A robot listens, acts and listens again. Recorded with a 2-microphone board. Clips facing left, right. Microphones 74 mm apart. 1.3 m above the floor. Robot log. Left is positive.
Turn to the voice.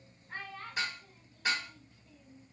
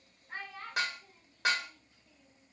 cmd yaw -30
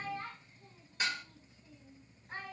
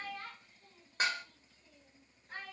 note: So it is at 20° left.
cmd yaw +20
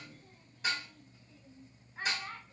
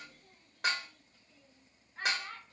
end: Facing the child speaking, 1 to 2 m away.